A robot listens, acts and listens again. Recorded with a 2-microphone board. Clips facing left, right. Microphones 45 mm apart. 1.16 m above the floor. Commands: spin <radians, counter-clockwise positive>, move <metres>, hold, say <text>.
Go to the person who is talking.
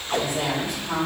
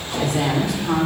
spin -1.22
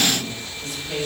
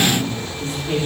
spin -0.70
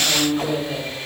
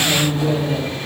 spin -0.26
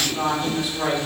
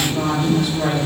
move 1.0
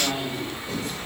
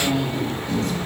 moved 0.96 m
move 1.0
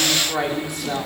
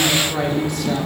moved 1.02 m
spin 0.17
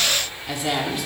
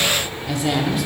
move 1.0
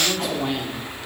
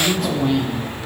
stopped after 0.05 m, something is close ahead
say Arrived at the woman speaking, straight ahead.